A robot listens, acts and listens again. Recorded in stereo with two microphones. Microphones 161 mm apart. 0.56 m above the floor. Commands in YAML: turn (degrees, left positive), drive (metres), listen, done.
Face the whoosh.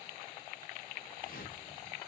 turn: 60
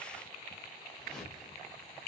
done: "Found it: a whoosh, straight ahead."